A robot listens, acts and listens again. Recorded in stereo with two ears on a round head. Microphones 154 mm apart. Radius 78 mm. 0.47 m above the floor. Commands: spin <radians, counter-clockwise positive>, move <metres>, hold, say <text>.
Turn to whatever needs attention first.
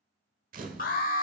spin 0.87
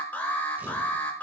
spin 0.17
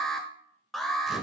say Found it: an alarm, straight ahead, 1 to 2 m away.